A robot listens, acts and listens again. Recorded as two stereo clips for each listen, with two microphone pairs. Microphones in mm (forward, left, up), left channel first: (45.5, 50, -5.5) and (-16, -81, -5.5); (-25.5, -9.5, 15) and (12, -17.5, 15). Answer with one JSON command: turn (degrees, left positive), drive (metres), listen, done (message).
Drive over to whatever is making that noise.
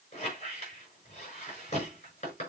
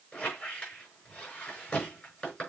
{"turn": 105}
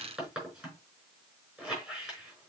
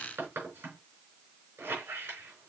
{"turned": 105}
{"turn": -30}
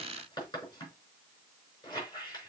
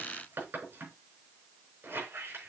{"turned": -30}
{"drive": 1.0}
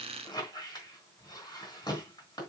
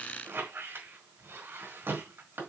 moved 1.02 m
{"drive": 1.0}
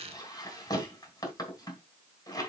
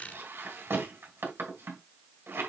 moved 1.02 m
{"drive": 1.0}
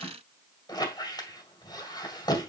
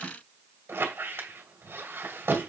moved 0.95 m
{"drive": 1.0}
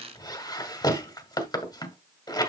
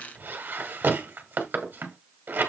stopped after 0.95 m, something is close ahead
{"done": "Arrived at the squeak, straight ahead."}